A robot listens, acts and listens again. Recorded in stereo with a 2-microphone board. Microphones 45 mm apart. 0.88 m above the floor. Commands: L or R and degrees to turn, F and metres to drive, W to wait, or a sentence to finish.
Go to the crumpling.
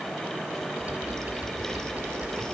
W
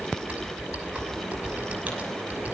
W
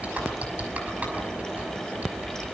I can't make out crumpling to turn to.